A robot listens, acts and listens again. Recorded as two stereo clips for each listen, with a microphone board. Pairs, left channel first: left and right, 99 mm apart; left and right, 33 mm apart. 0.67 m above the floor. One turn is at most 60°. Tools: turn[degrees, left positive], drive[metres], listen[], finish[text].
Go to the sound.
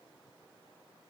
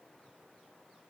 Action: listen[]
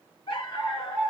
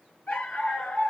Thought: The dog barking: about 45° left or 135° left.
Action: turn[45]
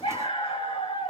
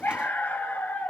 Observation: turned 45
Thought: So it is at 85° left.
Action: turn[60]
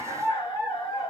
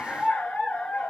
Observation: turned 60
Thought: The dog barking is now 45° left.
Action: turn[45]
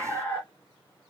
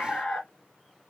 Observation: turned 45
Thought: The dog barking is now 25° left.
Action: turn[25]
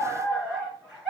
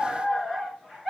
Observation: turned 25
Action: drive[1.0]
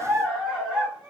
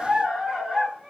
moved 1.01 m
Action: drive[1.0]
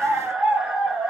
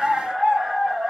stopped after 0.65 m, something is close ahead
Thought: The dog barking is now 10° right.
Action: turn[-10]
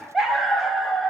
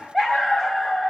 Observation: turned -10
Action: finish[I am next to the dog barking.]